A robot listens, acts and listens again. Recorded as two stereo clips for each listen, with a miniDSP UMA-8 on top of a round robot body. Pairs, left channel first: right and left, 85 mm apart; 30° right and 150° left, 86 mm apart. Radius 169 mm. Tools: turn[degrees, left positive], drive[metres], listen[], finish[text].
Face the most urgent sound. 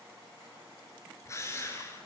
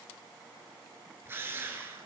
Action: listen[]
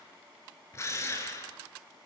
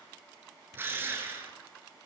Action: listen[]
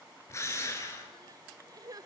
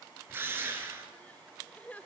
Thought: The crying: 45° left.
Action: turn[45]
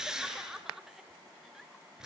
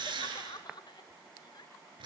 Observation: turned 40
Action: finish[Found it: crying, straight ahead.]